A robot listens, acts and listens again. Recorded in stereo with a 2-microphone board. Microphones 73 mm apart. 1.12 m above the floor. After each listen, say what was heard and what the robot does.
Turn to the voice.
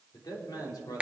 The man speaking: about 75° left or 105° left. Turn 75° left.
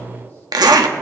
Keep listening.
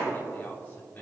So it is at 30° left. Turn 30° left.
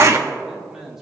The man speaking is now 10° right. Turn 10° right.
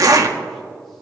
Keep listening.
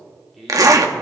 Facing the man speaking, 2 to 4 m away.